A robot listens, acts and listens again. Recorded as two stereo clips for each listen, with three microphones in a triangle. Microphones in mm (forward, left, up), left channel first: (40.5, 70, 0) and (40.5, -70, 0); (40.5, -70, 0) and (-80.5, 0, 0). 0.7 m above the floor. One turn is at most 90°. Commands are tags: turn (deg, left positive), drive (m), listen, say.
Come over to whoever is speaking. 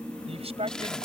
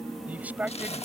<turn deg="-90"/>
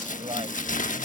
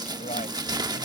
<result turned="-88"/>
<turn deg="-45"/>
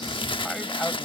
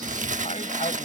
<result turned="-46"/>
<listen/>
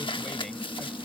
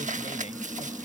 <say>I heard a man speaking from this way, but can't make it out now. I did not reach it.</say>